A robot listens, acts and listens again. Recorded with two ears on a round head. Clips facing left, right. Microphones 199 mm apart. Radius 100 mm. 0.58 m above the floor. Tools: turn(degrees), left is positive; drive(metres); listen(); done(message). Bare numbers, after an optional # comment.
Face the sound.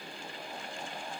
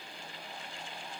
listen()
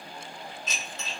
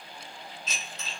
# The dishes clattering: about 45° left or 135° left.
turn(45)
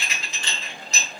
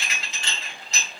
# So it is at 90° left.
turn(90)
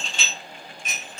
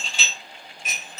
# The dishes clattering is now 10° right.
turn(-10)
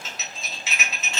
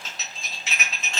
done("Facing the dishes clattering, 1 to 2 m away.")